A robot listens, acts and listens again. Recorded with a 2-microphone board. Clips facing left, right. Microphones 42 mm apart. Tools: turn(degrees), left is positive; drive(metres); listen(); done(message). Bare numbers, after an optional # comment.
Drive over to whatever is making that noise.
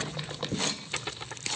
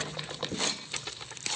# The tearing paper: about 20° left or 160° left.
turn(20)
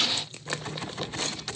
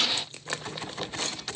listen()
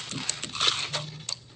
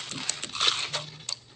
listen()
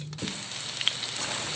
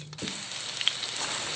done("I heard tearing paper, but can't make it out now. It was about straight ahead or 140° left. I did not reach it.")